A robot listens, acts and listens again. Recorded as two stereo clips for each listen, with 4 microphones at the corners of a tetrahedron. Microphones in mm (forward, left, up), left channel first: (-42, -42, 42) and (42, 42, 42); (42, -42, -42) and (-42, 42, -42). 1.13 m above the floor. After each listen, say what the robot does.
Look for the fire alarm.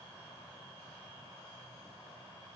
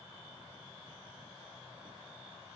Keep listening.
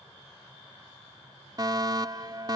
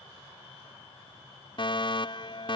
Found it: a fire alarm, straight ahead.